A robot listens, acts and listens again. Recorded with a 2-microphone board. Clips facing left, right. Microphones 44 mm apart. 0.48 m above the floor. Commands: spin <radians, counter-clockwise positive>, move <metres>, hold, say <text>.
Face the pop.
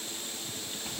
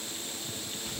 hold
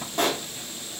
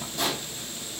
spin 0.79
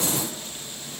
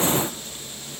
hold
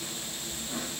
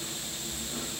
say I heard a pop, but can't make it out now. It was about straight ahead or 90° left.